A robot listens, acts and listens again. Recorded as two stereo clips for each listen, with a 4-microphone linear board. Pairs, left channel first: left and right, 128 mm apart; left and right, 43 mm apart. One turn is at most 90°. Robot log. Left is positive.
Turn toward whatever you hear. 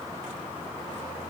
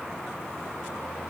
cmd idle
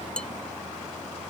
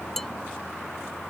cmd yaw +30
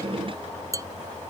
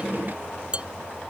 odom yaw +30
note: So it is at 25° right.
cmd yaw -25
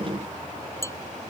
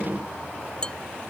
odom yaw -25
note: The dishes clattering is now 20° left.
cmd yaw +20
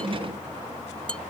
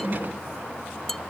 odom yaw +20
end: Found it: dishes clattering, straight ahead.